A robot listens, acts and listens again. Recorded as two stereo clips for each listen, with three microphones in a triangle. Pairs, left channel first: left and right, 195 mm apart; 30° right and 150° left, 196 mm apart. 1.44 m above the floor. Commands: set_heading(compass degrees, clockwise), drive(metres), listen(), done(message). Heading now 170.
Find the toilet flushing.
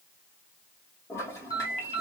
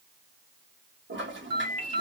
set_heading(5)
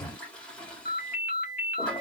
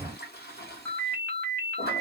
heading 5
done("Facing the toilet flushing, 1 to 2 m away.")